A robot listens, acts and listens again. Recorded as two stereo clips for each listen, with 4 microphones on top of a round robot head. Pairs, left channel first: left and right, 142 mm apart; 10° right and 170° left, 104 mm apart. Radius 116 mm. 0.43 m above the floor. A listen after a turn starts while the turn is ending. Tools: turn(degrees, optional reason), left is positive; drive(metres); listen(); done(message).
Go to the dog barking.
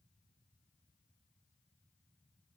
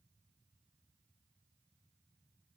listen()
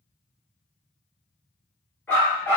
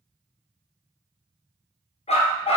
turn(degrees=10, reason="The dog barking: 10° left.")
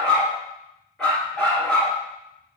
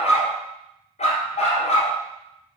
drive(metres=1.0)
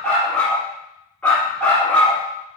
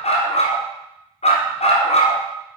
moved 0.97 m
drive(metres=1.0)
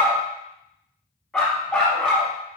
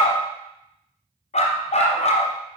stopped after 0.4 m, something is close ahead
done("I am next to the dog barking.")